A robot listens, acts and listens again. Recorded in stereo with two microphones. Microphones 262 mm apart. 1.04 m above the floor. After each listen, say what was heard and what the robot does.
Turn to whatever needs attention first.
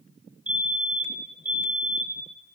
Turn 30° right.
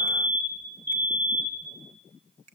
So it is at 145° right. Turn 145° right.
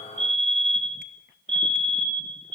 The fire alarm is now 25° right. Turn 25° right.
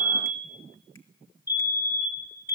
The fire alarm is now 10° right. Turn 10° right.
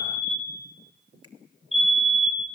Facing the fire alarm.